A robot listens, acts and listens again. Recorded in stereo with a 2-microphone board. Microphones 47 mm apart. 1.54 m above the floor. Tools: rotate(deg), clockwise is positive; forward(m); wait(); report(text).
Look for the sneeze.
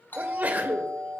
rotate(40)
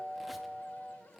wait()
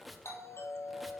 report("I heard a sneeze, but can't make it out now. It was about straight ahead or 100° right.")